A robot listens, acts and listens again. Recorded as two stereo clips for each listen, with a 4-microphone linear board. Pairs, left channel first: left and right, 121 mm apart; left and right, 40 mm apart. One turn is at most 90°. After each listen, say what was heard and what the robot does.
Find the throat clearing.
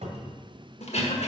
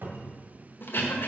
The throat clearing: about 60° left or 120° left. Turn 60° left.
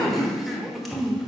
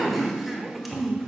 Facing the throat clearing.